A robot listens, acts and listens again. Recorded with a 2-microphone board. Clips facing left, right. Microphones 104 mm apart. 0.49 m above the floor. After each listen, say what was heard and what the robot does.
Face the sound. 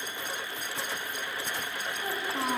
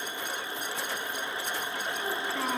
Turn 30° left.
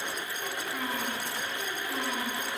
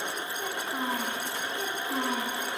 So it is at 35° right. Turn 35° right.
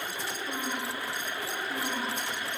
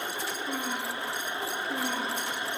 Facing the child speaking.